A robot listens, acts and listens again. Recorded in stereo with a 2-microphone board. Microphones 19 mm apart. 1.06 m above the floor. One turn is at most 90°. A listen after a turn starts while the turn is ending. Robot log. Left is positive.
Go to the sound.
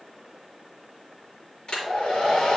note: The hair dryer: about 55° left or 125° left.
cmd yaw +55
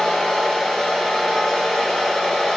note: So it is at 70° left.
cmd yaw +70
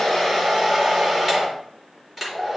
cmd fwd 1.0
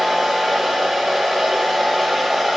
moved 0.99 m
cmd fwd 1.0
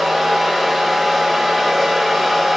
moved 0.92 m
cmd fwd 1.0
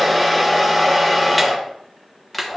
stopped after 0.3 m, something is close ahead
end: I am next to the hair dryer.